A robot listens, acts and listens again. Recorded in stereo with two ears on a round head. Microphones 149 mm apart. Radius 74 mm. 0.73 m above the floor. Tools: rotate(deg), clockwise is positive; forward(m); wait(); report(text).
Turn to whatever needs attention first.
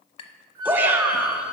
rotate(30)
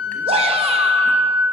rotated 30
rotate(135)
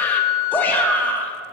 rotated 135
rotate(-15)
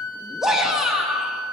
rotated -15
report("Facing the shout, under 1 m away.")